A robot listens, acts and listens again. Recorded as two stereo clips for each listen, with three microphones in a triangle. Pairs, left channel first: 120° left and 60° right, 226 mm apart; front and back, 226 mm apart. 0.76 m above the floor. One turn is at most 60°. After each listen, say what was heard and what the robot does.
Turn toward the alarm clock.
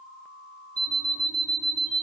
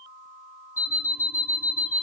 Found it: an alarm clock, straight ahead, under 1 m away.